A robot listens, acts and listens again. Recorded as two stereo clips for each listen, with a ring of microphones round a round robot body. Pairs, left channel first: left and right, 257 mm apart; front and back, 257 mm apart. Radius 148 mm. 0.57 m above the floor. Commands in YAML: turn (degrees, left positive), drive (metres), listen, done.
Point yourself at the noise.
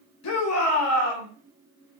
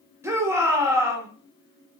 turn: 100
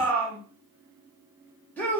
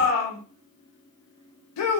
done: "Facing the shout, 1 to 2 m away."